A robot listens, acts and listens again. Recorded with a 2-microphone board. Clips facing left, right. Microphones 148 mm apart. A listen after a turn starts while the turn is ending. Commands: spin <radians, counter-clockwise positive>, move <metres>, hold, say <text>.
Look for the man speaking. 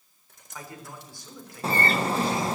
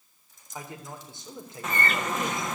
spin -0.35
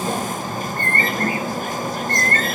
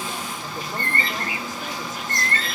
hold
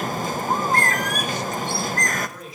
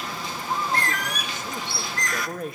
spin -2.18
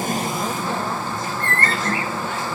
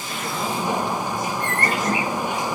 hold
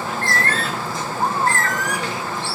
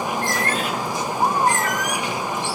hold
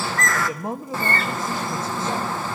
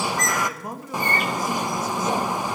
spin 0.44
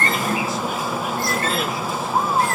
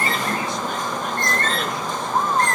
hold
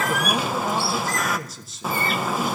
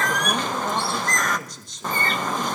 say Found it: a man speaking, straight ahead.